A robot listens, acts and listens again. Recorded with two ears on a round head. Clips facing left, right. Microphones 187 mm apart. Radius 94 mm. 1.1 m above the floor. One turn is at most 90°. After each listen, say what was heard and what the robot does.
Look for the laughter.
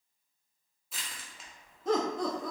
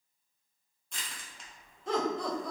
The laughter: about 40° left or 140° left. Turn 40° left.
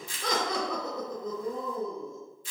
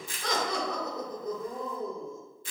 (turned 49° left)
So it is at 55° left. Turn 55° left.
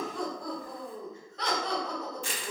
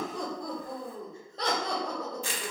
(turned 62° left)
The laughter is now 30° right. Turn 30° right.
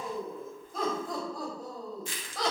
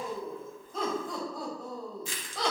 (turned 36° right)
Facing the laughter.